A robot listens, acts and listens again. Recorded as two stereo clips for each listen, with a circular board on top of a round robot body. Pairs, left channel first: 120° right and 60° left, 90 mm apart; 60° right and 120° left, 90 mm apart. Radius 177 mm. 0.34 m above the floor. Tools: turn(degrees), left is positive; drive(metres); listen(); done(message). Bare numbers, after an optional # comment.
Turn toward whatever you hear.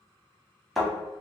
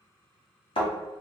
# The thud: 30° right.
turn(-30)
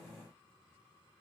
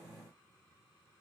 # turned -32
done("I heard a thud from this way, but can't make it out now.")